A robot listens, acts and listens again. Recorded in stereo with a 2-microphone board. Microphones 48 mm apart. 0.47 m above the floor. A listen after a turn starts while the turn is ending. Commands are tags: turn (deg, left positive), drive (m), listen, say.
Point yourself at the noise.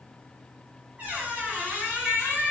<turn deg="-30"/>
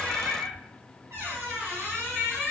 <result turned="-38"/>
<turn deg="-110"/>
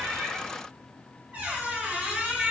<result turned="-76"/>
<turn deg="-35"/>
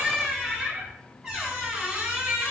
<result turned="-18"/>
<turn deg="-15"/>
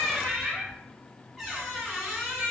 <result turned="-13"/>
<say>Facing the squeak, 1 to 2 m away.</say>